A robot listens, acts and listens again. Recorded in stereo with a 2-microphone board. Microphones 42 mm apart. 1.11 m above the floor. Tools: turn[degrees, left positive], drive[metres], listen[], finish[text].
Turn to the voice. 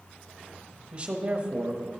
Thought: The man speaking: about 25° right or 155° right.
Action: turn[-25]
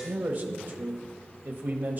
Thought: So it is at 130° right.
Action: turn[-130]
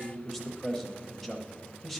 Action: finish[Facing the man speaking.]